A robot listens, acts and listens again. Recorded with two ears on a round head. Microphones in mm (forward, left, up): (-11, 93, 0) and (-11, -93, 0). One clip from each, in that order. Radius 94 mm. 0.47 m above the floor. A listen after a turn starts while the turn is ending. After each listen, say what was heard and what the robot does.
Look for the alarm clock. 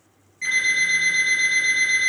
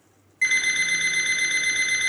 The alarm clock: about 60° right or 120° right. Turn 60° right.
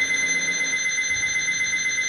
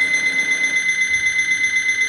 So it is at 60° right. Turn 60° right.
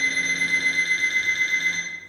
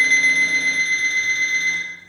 Found it: an alarm clock, straight ahead, 2 to 4 m away.